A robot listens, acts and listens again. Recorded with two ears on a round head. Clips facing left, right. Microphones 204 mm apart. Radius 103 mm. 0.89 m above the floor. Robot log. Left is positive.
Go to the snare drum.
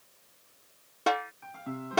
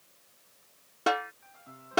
cmd yaw -30
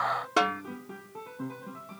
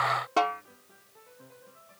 note: So it is at 20° left.
cmd yaw +20
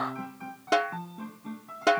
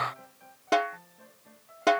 cmd fwd 1.0
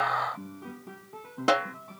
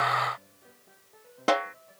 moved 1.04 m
cmd fwd 1.0
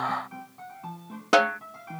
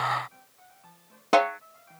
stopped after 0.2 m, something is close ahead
note: The snare drum is now 10° left.
cmd yaw +10
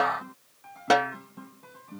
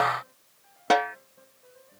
end: Arrived at the snare drum, straight ahead.